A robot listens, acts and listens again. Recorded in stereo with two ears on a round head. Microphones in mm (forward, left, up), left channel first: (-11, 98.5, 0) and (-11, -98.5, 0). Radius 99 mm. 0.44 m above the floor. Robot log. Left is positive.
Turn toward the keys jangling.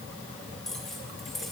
cmd yaw +30
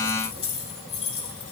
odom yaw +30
note: So it is at 150° left.
cmd yaw +150
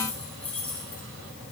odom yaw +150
end: Facing the keys jangling, over 4 m away.